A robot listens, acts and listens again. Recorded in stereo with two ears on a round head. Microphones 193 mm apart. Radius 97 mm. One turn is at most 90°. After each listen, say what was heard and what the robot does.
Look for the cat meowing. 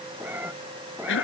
Turn 30° right.
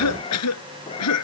So it is at 25° left. Turn 25° left.
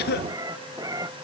The cat meowing is now 15° right. Turn 15° right.
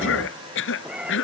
Facing the cat meowing.